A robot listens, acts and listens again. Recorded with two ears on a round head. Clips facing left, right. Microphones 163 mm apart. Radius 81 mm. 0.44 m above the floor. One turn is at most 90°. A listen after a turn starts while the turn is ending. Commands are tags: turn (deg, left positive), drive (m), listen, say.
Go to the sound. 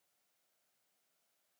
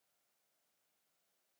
<listen/>
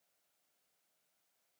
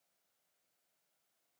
<listen/>
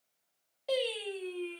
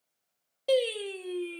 <turn deg="-60"/>
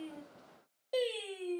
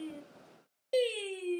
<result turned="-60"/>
<turn deg="-35"/>
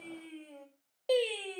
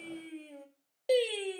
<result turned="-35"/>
<turn deg="-15"/>
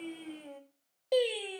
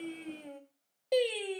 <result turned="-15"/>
<drive m="1.0"/>
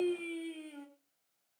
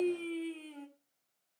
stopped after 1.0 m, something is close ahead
<turn deg="10"/>
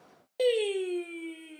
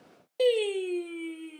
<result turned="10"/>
<say>I am next to the singing.</say>